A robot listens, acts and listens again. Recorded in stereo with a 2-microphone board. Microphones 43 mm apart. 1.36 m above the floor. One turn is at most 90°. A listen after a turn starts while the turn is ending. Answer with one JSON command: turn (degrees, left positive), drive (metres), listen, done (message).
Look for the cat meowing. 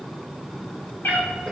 {"turn": 50}
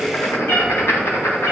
{"turn": 70}
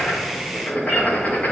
{"listen": true}
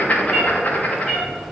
{"done": "Facing the cat meowing, over 4 m away."}